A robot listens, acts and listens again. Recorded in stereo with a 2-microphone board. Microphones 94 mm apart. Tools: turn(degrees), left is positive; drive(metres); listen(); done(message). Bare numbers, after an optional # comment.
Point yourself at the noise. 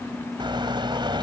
# The car horn: about 60° right or 120° right.
turn(-60)
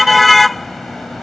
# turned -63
done("Found it: a car horn, straight ahead.")